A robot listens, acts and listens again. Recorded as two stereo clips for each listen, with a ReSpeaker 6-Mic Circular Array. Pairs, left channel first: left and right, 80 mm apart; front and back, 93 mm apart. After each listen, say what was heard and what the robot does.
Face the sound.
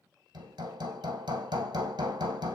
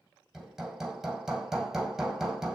The hammering: 95° right. Turn 95° right.
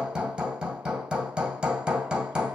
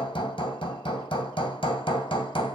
The hammering is now 10° right. Turn 10° right.
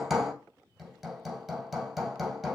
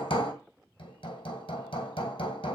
Facing the hammering, 2 to 4 m away.